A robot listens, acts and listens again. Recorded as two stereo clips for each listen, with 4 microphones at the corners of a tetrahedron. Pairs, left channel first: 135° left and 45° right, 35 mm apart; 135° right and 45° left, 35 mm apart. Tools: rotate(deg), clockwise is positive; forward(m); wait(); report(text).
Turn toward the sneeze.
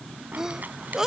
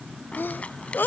rotate(120)
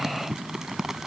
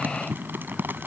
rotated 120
report("Facing where the sneeze came from. I can't hear it now.")